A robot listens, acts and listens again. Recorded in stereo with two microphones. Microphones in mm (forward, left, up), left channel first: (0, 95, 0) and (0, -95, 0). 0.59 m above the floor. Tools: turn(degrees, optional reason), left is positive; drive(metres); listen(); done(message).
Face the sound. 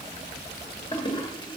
turn(degrees=25, reason="The toilet flushing: about 25° left or 155° left.")
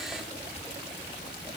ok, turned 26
listen()
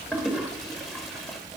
done("Found it: a toilet flushing, straight ahead.")